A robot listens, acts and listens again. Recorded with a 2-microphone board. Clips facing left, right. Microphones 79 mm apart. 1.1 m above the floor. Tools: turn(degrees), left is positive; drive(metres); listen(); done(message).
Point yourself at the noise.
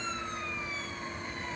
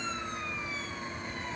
listen()
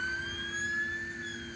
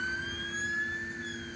listen()
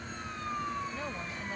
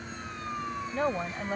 turn(degrees=-50)
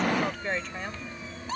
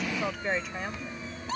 done("Facing the woman speaking.")